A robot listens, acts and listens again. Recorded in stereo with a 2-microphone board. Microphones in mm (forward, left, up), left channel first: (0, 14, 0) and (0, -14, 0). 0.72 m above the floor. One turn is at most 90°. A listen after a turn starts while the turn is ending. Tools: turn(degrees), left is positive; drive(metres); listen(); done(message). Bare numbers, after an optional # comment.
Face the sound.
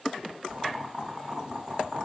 # The boiling: about 30° right or 150° right.
turn(-30)
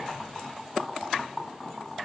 done("Facing the boiling.")